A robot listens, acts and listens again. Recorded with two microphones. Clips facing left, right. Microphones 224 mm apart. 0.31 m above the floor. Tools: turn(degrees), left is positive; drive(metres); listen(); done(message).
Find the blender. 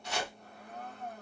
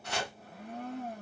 turn(degrees=-90)
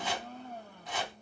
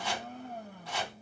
turn(degrees=-15)
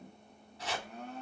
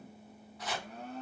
done("Facing the blender.")